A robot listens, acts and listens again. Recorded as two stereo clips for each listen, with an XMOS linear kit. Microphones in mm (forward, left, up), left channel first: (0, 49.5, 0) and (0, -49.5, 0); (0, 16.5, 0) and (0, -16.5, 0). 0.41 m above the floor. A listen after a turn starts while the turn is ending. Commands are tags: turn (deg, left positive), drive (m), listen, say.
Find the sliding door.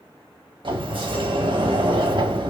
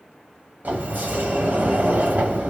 <turn deg="-60"/>
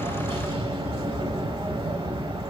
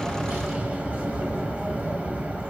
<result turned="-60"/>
<turn deg="-60"/>
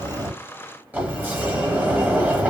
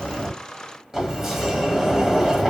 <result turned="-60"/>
<turn deg="-20"/>
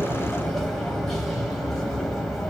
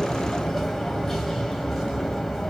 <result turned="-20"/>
<say>Found it: a sliding door, straight ahead, under 1 m away.</say>